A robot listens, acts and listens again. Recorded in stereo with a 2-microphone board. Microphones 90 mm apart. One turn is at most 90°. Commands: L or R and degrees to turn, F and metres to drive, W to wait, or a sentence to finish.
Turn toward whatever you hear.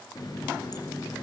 L45
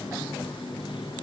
L90
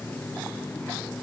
L20
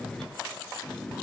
Facing the running tap.